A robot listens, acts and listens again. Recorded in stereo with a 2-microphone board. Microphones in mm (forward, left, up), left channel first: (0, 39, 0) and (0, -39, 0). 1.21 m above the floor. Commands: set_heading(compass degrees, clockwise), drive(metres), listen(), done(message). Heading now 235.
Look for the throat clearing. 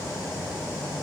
listen()
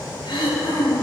set_heading(145)
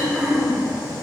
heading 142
set_heading(152)
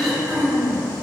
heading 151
done("Facing the throat clearing.")